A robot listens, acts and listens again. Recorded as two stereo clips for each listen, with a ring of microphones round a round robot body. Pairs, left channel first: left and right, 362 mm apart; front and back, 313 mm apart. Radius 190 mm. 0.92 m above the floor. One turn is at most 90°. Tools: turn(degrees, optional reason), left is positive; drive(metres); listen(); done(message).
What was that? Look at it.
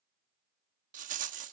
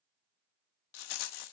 turn(degrees=-20, reason="The rattle: 20° right.")
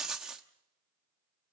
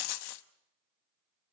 done("Facing the rattle, under 1 m away.")